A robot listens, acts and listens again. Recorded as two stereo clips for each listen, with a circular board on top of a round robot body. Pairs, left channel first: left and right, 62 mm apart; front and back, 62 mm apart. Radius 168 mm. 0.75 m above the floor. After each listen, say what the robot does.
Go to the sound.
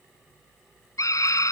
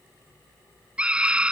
Turn 110° left.
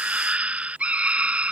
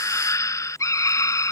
Turn 25° right.
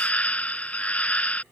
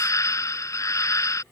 Turn 25° left.
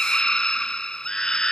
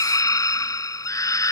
Turn 10° left.
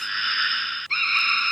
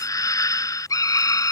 Drive 1.0 m forward.
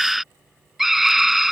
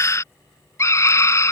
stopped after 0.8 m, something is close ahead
Arrived at the scream, straight ahead.